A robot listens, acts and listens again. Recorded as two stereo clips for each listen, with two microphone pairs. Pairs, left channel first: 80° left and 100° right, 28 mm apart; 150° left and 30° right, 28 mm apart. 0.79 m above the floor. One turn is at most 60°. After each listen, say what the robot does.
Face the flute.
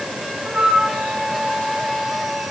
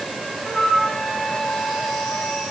Turn 60° right.
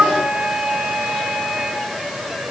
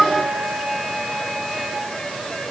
Turn 60° right.
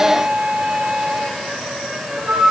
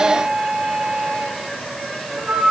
Turn 60° right.
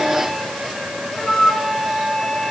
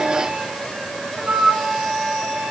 Facing the flute, 2 to 4 m away.